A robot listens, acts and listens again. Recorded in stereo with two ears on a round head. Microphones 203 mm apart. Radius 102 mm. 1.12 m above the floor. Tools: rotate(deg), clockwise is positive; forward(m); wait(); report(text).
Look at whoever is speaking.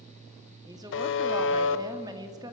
rotate(15)
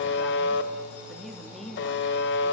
report("Facing the woman speaking, 2 to 4 m away.")